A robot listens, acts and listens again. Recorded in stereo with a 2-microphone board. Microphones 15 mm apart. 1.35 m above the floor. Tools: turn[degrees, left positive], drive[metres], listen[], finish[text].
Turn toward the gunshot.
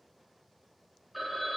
Action: listen[]
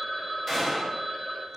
Thought: The gunshot: about 20° right or 160° right.
Action: turn[-20]
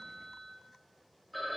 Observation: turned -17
Action: listen[]
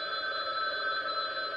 Action: finish[I heard a gunshot, but can't make it out now. It was about 5° right or 140° right.]